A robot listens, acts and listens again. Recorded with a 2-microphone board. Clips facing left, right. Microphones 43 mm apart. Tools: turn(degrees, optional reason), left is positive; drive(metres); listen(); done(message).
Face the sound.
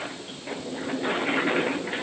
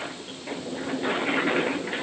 listen()
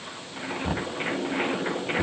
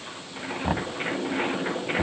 turn(degrees=-25, reason="The knocking: about 25° right or 155° right.")
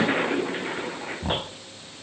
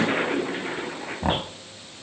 turn(degrees=-130, reason="So it is at 130° right.")
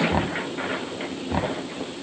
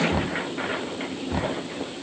turn(degrees=20, reason="The knocking is now 20° left.")
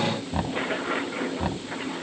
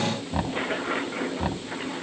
done("Found it: knocking, straight ahead.")